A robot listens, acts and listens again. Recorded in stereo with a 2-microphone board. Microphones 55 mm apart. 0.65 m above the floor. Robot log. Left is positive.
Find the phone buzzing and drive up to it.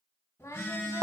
note: The phone buzzing: about 50° left or 130° left.
cmd yaw +50
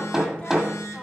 note: So it is at 70° left.
cmd yaw +70
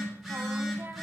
cmd fwd 1.0
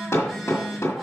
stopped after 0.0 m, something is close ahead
end: Blocked. The phone buzzing is further on, straight ahead.